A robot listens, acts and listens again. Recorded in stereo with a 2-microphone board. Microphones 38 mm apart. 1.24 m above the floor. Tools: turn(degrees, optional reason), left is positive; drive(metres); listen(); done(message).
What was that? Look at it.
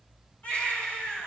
turn(degrees=45, reason="The baby crying: about 45° left or 135° left.")
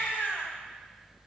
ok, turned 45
turn(degrees=90, reason="So it is at 90° left.")
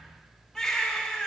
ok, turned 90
done("Facing the baby crying, 2 to 4 m away.")